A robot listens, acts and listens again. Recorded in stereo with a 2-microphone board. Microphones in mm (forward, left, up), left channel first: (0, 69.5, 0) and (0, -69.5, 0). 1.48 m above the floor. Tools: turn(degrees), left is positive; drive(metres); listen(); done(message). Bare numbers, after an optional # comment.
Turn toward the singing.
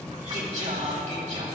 # The singing: about 60° right or 120° right.
turn(-60)
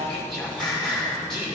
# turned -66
done("Found it: singing, straight ahead, 2 to 4 m away.")